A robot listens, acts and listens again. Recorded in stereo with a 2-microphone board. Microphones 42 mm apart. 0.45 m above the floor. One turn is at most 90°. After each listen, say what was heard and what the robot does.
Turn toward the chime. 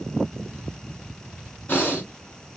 Keep listening.
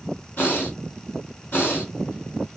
Keep listening.
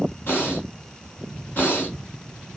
I can't make out a chime to turn to.